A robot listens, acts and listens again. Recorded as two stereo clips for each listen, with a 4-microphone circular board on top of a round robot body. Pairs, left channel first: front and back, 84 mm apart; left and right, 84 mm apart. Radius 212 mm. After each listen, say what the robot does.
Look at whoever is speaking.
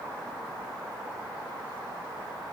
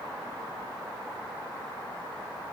Keep listening.
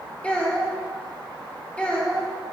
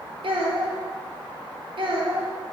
Turn 75° right.
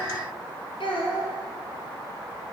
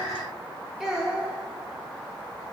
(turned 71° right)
Facing the child speaking, 1 to 2 m away.